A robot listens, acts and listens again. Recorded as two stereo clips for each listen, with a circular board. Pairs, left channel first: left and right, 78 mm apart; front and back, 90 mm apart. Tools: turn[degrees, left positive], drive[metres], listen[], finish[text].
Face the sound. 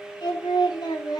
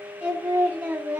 Thought: The singing: 110° left.
Action: turn[110]
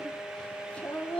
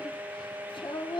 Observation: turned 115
Thought: The singing is now 20° left.
Action: turn[20]
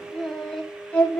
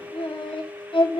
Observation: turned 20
Thought: The singing is now 15° left.
Action: turn[15]
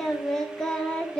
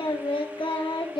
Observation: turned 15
Thought: The singing is now 15° left.
Action: turn[15]
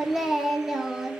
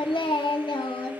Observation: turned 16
Action: finish[Facing the singing.]